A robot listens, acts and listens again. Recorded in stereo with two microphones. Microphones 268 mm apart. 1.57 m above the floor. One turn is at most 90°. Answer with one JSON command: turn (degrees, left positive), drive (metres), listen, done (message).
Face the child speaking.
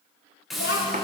{"turn": 55}
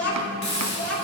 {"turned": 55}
{"turn": 65}
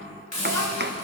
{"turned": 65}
{"turn": 15}
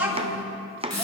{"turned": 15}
{"done": "Facing the child speaking, 2 to 4 m away."}